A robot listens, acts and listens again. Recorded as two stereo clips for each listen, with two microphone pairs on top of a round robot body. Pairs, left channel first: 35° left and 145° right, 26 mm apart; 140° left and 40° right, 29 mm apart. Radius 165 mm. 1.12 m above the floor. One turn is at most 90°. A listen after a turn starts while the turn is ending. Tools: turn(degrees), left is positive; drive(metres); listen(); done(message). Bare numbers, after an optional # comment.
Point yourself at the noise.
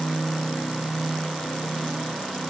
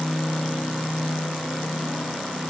listen()
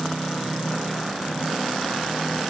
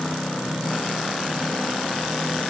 listen()
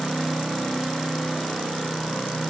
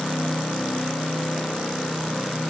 done("I can't make out anything to turn to.")